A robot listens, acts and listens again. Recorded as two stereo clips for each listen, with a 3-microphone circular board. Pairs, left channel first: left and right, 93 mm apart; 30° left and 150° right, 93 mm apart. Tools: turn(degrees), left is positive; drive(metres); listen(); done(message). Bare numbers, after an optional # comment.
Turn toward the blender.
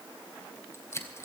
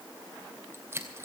listen()
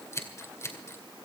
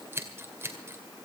listen()
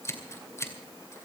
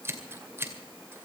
done("I can't make out a blender, only scissors.")